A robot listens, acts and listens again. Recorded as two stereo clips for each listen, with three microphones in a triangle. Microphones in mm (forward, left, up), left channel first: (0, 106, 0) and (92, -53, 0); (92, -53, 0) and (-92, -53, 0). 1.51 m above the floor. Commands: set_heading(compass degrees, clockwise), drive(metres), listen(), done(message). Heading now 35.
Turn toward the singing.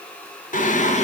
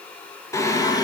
set_heading(325)
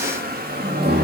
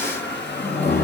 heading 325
set_heading(350)
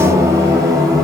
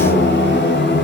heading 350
set_heading(340)
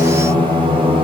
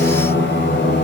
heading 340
done("Facing the singing, over 4 m away.")